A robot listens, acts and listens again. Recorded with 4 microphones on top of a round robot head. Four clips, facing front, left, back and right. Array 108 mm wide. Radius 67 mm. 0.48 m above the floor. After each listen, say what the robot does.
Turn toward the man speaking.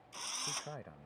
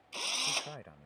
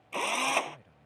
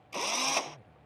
Turn 45° left.
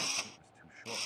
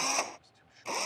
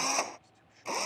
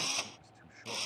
Turn 30° right.
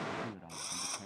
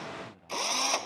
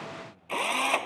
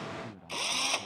Turn 20° right.
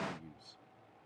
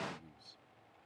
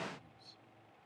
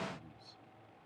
Facing the man speaking.